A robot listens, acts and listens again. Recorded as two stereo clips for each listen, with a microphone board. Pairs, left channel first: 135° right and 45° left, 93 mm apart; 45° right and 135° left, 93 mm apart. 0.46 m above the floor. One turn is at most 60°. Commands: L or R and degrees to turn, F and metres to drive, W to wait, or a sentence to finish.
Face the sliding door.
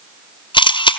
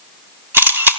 W
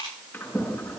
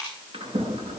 L60
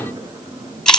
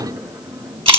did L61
L60
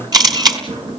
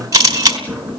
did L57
L35
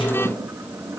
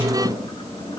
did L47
R10
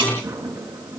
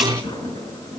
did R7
Found it: a sliding door, straight ahead, over 4 m away.